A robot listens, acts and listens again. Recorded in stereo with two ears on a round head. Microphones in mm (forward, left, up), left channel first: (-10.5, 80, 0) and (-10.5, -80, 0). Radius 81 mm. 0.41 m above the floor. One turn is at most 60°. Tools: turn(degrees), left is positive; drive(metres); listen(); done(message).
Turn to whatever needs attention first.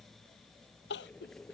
turn(degrees=60)
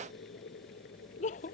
turn(degrees=45)
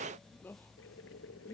turn(degrees=10)
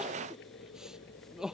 done("Facing the crying.")